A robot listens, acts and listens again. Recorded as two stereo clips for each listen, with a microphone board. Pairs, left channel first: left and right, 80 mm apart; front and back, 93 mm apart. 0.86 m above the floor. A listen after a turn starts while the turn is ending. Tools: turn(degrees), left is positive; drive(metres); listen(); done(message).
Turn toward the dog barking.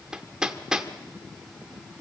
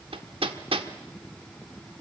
listen()
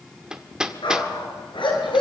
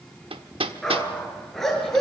turn(degrees=85)
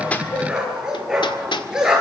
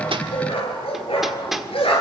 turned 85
turn(degrees=-10)
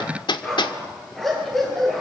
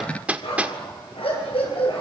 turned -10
done("Facing the dog barking.")